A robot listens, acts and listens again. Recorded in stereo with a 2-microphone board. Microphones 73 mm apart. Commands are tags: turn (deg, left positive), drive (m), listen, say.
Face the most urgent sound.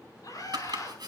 <turn deg="55"/>
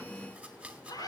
<turn deg="65"/>
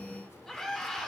<turn deg="10"/>
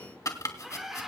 <say>Found it: a scream, straight ahead.</say>